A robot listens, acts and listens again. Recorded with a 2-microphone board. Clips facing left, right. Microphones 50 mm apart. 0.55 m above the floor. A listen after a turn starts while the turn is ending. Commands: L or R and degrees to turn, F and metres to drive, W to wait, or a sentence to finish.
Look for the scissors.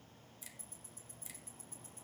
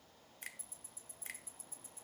W
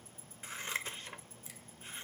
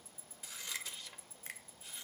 L40
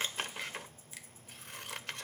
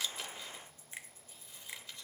L100
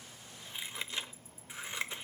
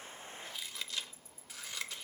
L30
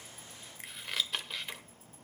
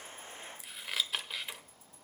Facing the scissors.